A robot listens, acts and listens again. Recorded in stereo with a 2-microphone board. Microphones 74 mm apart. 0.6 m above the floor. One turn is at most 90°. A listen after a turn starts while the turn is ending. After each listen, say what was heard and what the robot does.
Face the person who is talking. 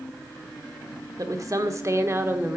The woman speaking: about 30° right or 150° right. Turn 30° right.
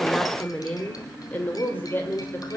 So it is at 35° left. Turn 35° left.
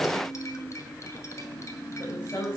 The woman speaking is now 35° left. Turn 35° left.
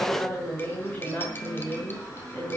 The woman speaking is now 20° left. Turn 20° left.
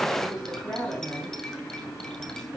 Found it: a woman speaking, straight ahead.